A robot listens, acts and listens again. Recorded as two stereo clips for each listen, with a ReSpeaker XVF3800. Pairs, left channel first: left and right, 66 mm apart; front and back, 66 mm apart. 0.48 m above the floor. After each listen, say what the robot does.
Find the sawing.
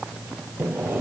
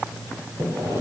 Turn 145° right.
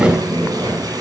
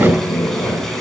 Turn 10° right.
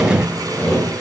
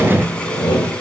Found it: sawing, straight ahead, over 4 m away.